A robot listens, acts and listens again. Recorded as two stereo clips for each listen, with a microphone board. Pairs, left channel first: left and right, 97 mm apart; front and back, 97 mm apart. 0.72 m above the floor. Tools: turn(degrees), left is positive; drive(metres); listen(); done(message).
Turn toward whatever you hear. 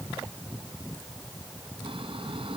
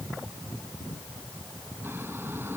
turn(degrees=-115)
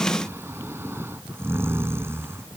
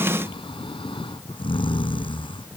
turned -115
turn(degrees=-25)
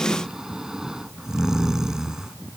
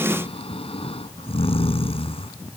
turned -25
done("Facing the snoring.")